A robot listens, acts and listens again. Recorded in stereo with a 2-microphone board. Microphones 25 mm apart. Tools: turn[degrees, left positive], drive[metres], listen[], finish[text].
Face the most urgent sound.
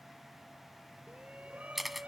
Thought: The shout: about 70° right or 110° right.
Action: turn[-70]
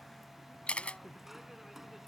Thought: So it is at 10° right.
Action: turn[-10]
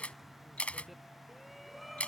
Action: finish[Found it: a shout, straight ahead.]